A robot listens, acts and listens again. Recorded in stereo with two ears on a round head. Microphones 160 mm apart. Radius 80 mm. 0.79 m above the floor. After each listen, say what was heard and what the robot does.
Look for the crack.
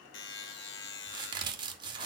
The crack: about 25° right or 155° right. Turn 25° right.
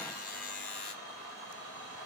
Keep listening.
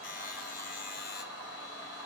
I heard a crack, but can't make it out now. It was about straight ahead or 130° right.